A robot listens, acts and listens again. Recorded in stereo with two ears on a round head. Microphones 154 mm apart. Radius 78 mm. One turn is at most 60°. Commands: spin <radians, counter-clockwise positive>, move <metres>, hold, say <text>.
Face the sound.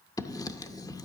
spin 0.35
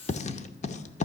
spin 1.05
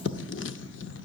spin 1.05
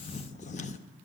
spin 0.70
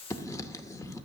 spin 0.35
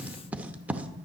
spin -0.17
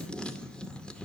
say Found it: writing, straight ahead.